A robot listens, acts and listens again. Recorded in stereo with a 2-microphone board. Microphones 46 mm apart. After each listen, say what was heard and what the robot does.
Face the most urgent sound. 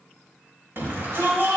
The shout: about 55° right or 125° right. Turn 55° right.
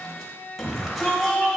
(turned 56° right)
Found it: a shout, straight ahead, 2 to 4 m away.